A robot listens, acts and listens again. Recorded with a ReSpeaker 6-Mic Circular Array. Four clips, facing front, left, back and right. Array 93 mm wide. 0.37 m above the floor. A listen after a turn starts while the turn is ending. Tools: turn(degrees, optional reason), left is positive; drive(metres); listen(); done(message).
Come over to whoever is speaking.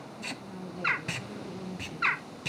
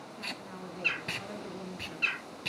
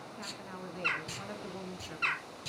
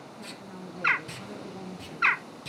turn(degrees=165, reason="The woman speaking: 165° left.")
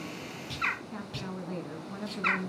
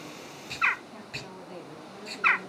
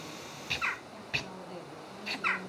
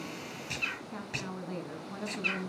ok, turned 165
turn(degrees=-40, reason="The woman speaking is now 40° right.")
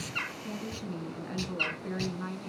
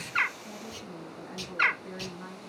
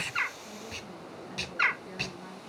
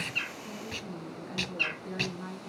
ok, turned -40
drive(metres=1.0)
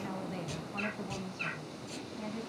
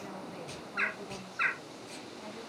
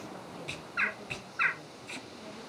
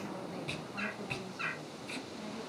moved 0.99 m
listen()
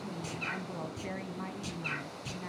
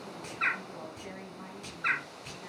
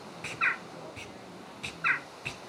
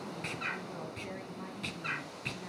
listen()
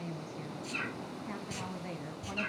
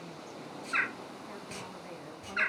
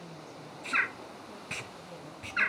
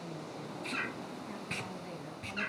drive(metres=1.0)
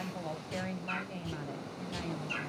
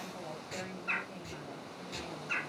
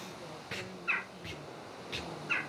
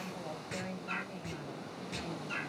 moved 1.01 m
drive(metres=1.0)
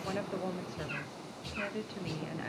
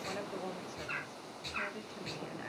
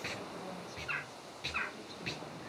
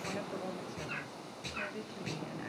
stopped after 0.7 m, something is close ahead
turn(degrees=10, reason="The woman speaking is now 10° left.")
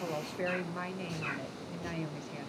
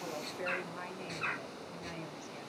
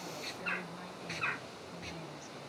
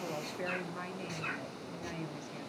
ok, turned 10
done("Arrived at the woman speaking, straight ahead.")